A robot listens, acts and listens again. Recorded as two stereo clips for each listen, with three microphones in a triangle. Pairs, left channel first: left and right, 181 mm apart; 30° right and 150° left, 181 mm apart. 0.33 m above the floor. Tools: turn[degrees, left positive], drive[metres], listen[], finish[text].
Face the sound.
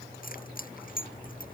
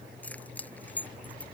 Thought: The keys jangling: 50° left.
Action: turn[50]
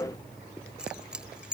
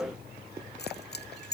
Action: finish[Facing the keys jangling.]